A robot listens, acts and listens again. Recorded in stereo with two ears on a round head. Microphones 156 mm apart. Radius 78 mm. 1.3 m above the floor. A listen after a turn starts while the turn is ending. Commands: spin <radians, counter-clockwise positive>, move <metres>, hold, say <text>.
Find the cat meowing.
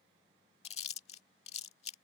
hold
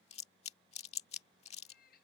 spin 0.96
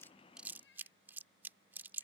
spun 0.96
spin 1.22
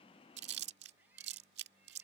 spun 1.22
hold
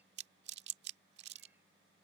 hold
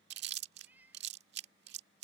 spin -0.17
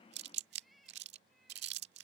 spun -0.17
say Facing the cat meowing.